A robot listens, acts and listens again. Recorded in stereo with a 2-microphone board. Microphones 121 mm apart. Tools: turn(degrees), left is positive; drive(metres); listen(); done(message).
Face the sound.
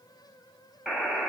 turn(degrees=-30)
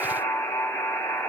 turn(degrees=20)
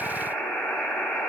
done("Found it: a buzzer, straight ahead, 1 to 2 m away.")